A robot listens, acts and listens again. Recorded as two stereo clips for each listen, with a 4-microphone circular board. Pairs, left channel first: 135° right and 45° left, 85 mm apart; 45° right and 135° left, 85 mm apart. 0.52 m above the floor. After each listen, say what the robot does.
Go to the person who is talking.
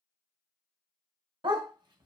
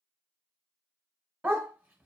Keep listening.
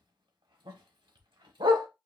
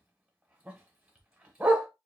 Keep listening.
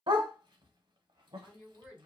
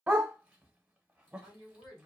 Turn 35° right.
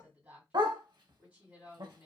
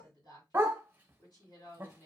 Turn 25° right.
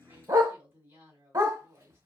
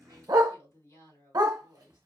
Drive 1.0 m forward.
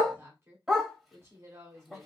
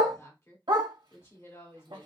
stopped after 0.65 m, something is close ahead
I am next to the woman speaking.